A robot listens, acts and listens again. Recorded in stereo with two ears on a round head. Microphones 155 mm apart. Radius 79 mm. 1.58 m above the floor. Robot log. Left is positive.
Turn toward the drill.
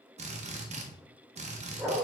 note: The drill: about 40° right or 140° right.
cmd yaw -40
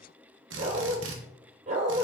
note: So it is at 100° right.
cmd yaw -100
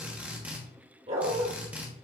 note: The drill is now 10° right.
cmd yaw -10
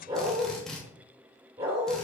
end: Facing the drill.